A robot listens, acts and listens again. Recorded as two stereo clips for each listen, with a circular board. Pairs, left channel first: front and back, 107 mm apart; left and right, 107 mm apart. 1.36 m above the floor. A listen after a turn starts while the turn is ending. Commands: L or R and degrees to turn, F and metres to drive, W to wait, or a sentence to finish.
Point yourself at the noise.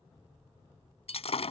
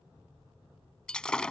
L10
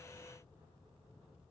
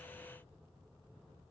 Facing where the breaking glass came from. I can't hear it now.